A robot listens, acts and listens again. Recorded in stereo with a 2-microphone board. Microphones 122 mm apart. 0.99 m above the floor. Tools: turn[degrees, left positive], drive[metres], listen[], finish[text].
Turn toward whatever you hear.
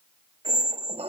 Thought: The squeak: about 60° right or 120° right.
Action: turn[-60]
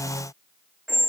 Action: finish[Found it: a squeak, straight ahead.]